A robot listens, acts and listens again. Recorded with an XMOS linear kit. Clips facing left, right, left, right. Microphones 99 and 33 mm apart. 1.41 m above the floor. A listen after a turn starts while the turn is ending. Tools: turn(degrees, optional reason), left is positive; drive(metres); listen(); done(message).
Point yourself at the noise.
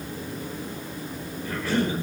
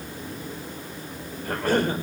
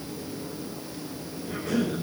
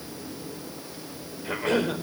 turn(degrees=-50, reason="The cough: about 50° right or 130° right.")
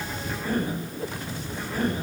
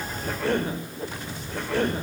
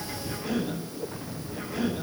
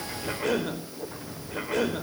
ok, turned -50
turn(degrees=-80, reason="So it is at 80° right.")
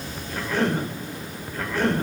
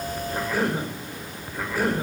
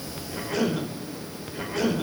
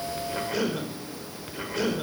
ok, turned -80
done("Found it: a cough, straight ahead, over 4 m away.")